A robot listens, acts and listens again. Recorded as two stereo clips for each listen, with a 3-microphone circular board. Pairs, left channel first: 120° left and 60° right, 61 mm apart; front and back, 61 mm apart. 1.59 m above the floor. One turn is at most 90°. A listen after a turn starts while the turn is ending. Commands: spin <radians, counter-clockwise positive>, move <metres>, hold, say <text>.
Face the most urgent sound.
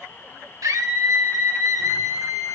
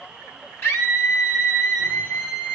spin -0.79
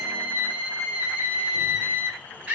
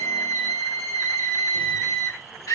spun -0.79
say Facing the scream.